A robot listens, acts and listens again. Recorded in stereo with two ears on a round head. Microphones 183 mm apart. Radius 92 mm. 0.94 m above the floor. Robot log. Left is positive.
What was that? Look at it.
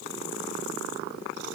cmd idle
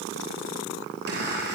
note: The chime: about 50° right or 130° right.
cmd yaw -50
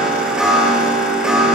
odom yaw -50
end: Found it: a chime, straight ahead.